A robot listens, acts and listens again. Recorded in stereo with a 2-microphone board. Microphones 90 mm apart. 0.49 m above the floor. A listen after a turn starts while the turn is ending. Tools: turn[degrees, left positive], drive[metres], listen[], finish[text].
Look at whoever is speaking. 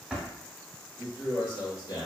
Thought: The man speaking: about 50° left or 130° left.
Action: turn[50]
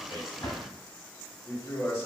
Thought: So it is at 30° left.
Action: turn[30]
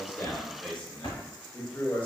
Thought: The man speaking is now 25° left.
Action: turn[25]
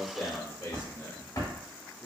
Thought: The man speaking is now 20° left.
Action: turn[20]
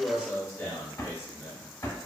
Thought: The man speaking is now 10° left.
Action: turn[10]
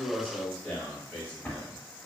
Action: finish[Facing the man speaking, 1 to 2 m away.]